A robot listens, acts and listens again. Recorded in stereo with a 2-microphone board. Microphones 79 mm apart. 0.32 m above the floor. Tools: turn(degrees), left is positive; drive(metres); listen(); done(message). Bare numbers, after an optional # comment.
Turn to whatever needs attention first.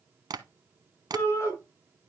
# The shout: about 35° left or 145° left.
turn(35)
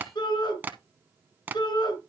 # So it is at 110° left.
turn(110)
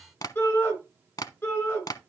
# The shout is now 30° left.
turn(30)
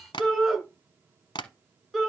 done("Found it: a shout, straight ahead, 2 to 4 m away.")